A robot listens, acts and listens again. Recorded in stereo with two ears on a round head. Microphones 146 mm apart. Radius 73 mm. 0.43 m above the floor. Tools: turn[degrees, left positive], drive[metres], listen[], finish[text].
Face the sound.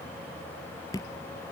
Thought: The dripping: about 25° left or 155° left.
Action: turn[25]
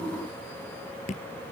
Thought: So it is at 130° left.
Action: turn[130]
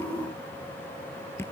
Thought: The dripping is now 15° left.
Action: turn[15]
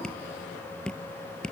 Action: finish[Facing the dripping.]